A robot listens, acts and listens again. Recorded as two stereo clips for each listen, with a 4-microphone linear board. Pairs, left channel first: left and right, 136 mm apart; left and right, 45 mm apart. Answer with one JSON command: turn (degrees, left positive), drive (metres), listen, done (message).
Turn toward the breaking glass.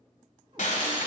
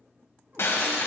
{"turn": 65}
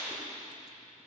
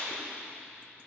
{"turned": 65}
{"turn": 35}
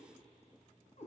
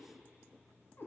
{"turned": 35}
{"done": "I heard breaking glass from this way, but can't make it out now."}